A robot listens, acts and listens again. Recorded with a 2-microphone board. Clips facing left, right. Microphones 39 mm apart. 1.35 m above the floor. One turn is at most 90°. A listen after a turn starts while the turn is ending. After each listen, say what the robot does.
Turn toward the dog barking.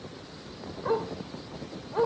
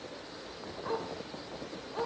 Turn 20° left.
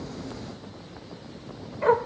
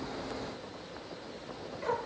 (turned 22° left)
Turn 90° left.
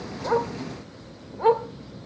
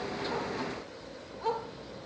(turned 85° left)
Turn 50° left.
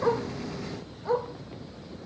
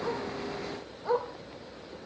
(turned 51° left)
Found it: a dog barking, straight ahead, 1 to 2 m away.